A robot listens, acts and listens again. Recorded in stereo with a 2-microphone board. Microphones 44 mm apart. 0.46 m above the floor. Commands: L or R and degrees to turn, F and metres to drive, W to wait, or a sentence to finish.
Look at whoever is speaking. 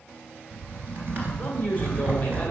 L30
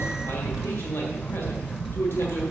L115
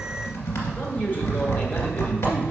W
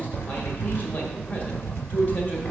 L40
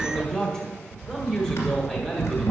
L15
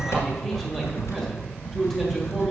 Found it: a man speaking, straight ahead, 1 to 2 m away.